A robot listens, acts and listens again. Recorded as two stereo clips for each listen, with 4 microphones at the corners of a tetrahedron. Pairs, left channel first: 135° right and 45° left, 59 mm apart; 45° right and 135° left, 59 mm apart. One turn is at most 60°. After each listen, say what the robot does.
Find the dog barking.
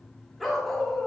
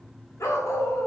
Turn 55° right.
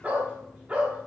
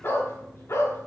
Turn 20° right.
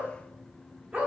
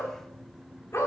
Turn 20° right.
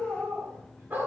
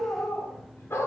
Turn 10° right.
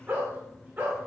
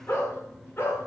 Facing the dog barking, 2 to 4 m away.